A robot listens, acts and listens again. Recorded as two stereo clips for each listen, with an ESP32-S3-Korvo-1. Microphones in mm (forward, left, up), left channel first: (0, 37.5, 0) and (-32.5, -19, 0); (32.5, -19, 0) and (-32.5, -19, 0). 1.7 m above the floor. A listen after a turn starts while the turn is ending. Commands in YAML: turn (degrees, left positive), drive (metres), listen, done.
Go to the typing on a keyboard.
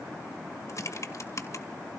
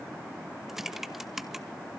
turn: 95
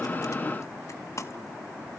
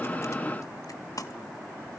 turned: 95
turn: 25
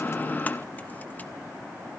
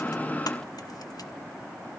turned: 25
listen: true
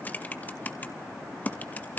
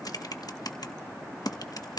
drive: 1.0
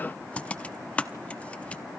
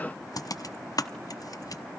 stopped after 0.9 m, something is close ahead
turn: -10
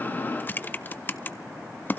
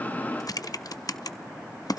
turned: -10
done: "Arrived at the typing on a keyboard, straight ahead."